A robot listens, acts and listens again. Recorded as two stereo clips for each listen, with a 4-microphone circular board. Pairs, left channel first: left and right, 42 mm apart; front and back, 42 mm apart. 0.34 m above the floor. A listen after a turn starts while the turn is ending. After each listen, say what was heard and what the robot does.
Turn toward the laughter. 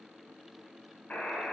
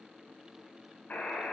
Keep listening.
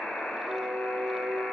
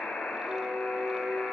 Keep listening.
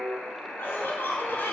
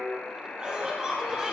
The laughter: 110° left. Turn 110° left.
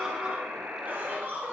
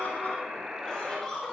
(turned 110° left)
The laughter is now 75° right. Turn 75° right.
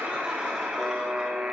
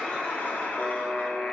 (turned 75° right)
Keep listening.
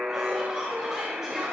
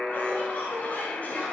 The laughter is now 10° right. Turn 10° right.
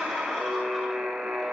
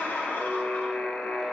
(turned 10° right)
Keep listening.
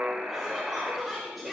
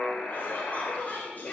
Found it: laughter, straight ahead.